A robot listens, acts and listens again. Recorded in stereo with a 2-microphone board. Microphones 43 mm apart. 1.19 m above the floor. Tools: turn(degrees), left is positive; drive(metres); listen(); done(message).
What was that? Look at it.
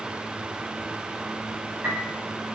turn(degrees=-50)
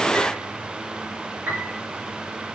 turn(degrees=-80)
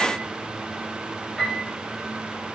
turn(degrees=-15)
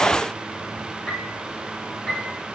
done("Found it: a piano, straight ahead.")